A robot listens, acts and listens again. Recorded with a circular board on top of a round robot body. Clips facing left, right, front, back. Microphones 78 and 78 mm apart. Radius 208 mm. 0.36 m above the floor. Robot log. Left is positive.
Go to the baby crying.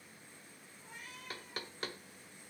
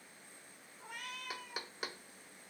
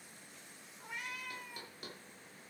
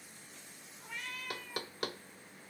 cmd idle
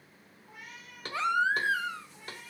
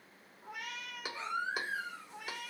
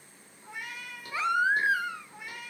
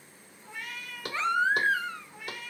note: The baby crying: 85° left.
cmd yaw +85
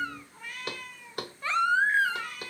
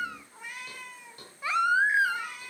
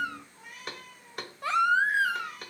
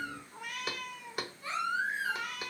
note: The baby crying is now 10° right.
cmd yaw -10
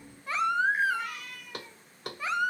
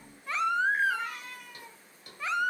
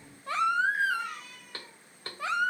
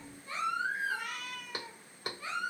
cmd fwd 1.0
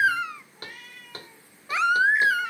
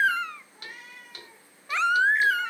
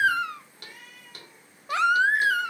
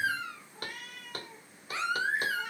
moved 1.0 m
cmd fwd 1.0
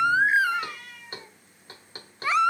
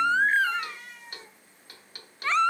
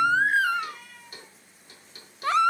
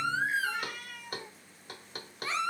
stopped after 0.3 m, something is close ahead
note: The baby crying is now 10° left.
cmd yaw +10
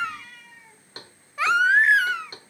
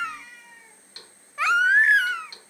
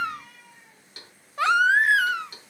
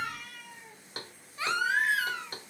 end: Arrived at the baby crying, straight ahead.